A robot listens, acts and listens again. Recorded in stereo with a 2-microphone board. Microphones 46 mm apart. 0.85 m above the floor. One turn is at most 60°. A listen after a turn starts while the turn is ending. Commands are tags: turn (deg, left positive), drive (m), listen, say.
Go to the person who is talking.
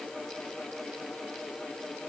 <listen/>
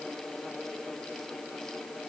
<listen/>
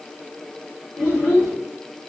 <turn deg="60"/>
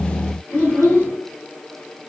<turn deg="40"/>
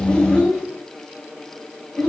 <drive m="1.0"/>
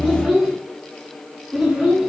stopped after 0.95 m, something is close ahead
<say>I am next to the child speaking.</say>